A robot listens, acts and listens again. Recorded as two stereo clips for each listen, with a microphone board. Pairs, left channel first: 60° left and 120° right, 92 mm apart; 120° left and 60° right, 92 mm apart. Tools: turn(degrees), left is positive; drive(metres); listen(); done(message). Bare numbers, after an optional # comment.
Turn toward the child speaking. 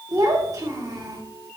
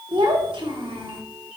# The child speaking: 70° right.
turn(-70)
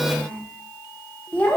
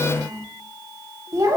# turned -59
# The child speaking is now 15° right.
turn(-15)
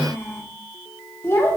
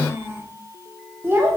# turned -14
done("Found it: a child speaking, straight ahead.")